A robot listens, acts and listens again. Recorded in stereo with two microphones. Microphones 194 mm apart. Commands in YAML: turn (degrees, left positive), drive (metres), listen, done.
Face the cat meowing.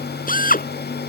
listen: true
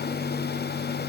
listen: true
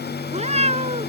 turn: -35
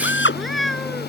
done: "Facing the cat meowing."